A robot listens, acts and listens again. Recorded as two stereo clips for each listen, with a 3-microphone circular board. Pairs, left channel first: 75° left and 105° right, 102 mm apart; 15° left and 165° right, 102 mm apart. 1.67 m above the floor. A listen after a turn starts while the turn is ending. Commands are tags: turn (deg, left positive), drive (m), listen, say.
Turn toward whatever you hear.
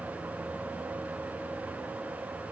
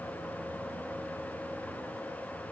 <listen/>
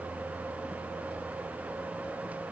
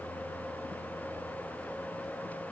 <listen/>
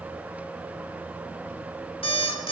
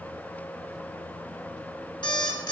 <turn deg="55"/>
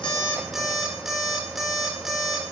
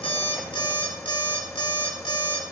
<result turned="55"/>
<turn deg="-20"/>
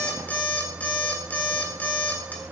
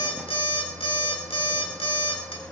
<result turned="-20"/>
<say>Found it: an alarm clock, straight ahead.</say>